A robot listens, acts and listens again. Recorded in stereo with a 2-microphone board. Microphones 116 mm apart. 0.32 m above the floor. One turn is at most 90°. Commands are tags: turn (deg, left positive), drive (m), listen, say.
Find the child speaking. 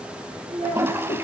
<turn deg="-90"/>
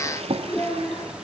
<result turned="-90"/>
<turn deg="10"/>
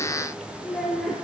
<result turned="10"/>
<say>Found it: a child speaking, straight ahead.</say>